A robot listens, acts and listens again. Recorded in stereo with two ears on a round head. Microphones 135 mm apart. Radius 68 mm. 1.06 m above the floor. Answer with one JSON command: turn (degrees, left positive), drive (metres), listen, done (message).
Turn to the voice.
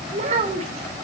{"turn": -50}
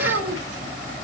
{"turn": -80}
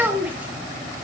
{"turn": -10}
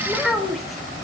{"done": "Facing the child speaking, 2 to 4 m away."}